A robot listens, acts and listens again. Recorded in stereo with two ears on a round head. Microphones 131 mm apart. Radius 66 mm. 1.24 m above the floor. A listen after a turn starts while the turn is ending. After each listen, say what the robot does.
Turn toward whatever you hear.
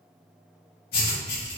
Turn 90° left.
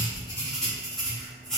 Found it: writing, straight ahead, 1 to 2 m away.